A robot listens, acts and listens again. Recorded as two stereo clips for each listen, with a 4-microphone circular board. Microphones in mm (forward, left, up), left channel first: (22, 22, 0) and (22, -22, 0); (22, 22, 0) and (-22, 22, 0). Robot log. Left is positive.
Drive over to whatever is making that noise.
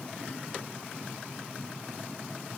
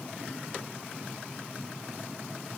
cmd idle
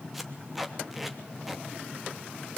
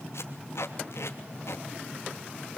cmd fwd 1.0
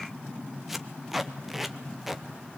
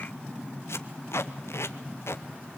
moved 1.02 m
cmd fwd 1.0
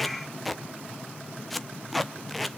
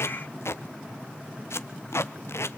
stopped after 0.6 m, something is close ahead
end: I am next to the tape being pulled.